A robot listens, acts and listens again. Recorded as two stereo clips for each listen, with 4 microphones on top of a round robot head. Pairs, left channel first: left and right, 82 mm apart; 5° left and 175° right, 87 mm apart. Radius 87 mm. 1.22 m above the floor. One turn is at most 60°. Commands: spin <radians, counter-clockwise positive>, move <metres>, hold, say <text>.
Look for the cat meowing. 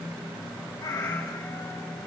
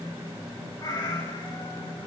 spin 0.79
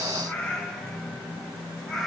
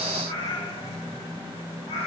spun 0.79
say Facing the cat meowing.